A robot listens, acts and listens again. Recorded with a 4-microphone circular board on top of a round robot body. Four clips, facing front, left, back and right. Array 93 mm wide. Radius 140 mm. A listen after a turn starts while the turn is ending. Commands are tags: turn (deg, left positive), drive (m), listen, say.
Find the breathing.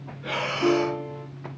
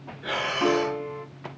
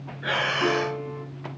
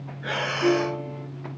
<turn deg="-165"/>
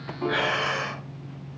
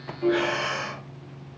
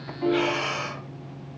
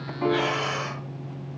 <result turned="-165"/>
<turn deg="25"/>
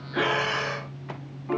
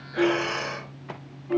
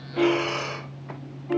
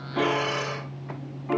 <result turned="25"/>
<turn deg="20"/>
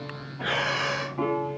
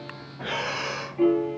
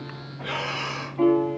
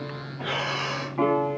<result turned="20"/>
<say>Facing the breathing.</say>